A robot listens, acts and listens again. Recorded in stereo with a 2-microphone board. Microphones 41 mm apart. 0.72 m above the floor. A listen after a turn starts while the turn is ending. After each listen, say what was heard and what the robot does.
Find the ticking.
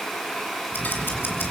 The ticking: about 60° left or 120° left. Turn 60° left.
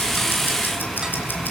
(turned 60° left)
So it is at 60° left. Turn 60° left.
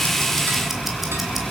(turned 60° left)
Facing the ticking.